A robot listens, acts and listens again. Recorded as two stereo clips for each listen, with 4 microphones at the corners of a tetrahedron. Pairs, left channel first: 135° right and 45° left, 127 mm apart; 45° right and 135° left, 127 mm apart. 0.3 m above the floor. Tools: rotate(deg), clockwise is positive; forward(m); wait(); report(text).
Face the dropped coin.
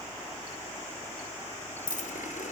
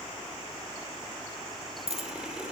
rotate(-170)
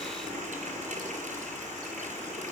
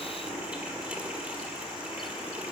report("I heard a dropped coin from this way, but can't make it out now.")